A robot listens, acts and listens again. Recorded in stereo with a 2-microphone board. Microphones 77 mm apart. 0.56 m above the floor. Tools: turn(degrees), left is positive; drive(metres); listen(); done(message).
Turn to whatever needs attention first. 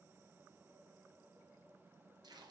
listen()
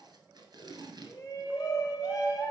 turn(degrees=45)
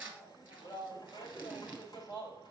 turn(degrees=85)
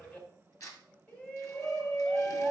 turn(degrees=25)
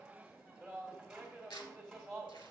done("Facing the shout, 2 to 4 m away.")